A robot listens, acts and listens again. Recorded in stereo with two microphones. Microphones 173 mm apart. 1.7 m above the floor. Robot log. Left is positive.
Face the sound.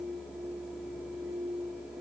cmd idle
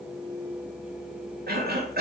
note: The cough: about 65° right or 115° right.
cmd yaw -65
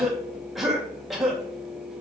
end: Found it: a cough, straight ahead.